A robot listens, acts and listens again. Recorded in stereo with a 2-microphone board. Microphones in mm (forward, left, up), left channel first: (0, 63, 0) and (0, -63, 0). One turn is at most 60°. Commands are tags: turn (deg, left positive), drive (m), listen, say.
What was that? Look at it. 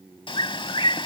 <turn deg="45"/>
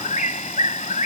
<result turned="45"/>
<turn deg="60"/>
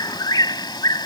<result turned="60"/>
<turn deg="35"/>
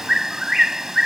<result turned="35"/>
<say>Facing the bird.</say>